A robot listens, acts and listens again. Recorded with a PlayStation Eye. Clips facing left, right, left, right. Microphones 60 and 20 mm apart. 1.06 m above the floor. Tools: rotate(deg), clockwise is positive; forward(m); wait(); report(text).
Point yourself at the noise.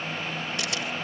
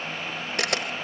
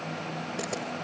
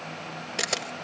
rotate(65)
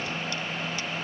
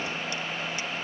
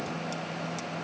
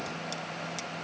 wait()
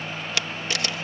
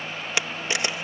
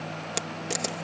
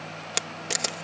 rotate(25)
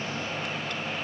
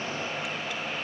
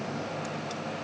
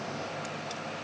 wait()
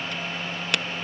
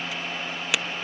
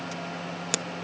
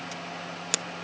report("Found it: a camera shutter, straight ahead.")